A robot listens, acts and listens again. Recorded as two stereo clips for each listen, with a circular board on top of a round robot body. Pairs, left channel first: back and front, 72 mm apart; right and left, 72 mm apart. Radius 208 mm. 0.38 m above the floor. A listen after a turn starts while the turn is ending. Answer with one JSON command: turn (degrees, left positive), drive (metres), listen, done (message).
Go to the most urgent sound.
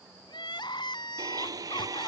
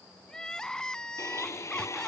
{"turn": -170}
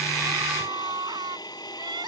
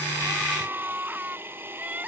{"turn": 20}
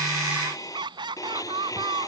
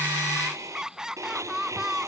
{"drive": 1.0}
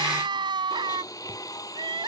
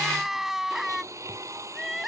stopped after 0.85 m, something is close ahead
{"done": "Something is in my way. I am facing the crying but have not reached it."}